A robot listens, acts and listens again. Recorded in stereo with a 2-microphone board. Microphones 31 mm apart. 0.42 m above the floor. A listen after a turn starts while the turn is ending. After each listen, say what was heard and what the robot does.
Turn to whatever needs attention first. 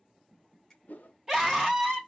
Turn 30° right.
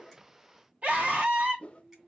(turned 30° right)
So it is at 135° right. Turn 135° right.
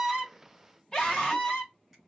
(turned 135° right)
The scream is now 25° left. Turn 25° left.
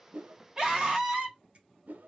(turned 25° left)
The scream is now 20° right. Turn 20° right.
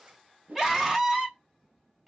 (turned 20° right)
Facing the scream, 2 to 4 m away.